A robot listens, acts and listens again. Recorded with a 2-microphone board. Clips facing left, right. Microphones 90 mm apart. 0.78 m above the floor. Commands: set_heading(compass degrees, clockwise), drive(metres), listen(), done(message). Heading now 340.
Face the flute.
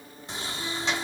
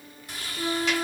set_heading(25)
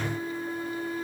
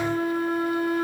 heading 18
set_heading(113)
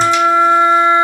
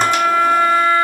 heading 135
set_heading(115)
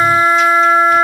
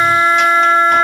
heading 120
done("Found it: a flute, straight ahead.")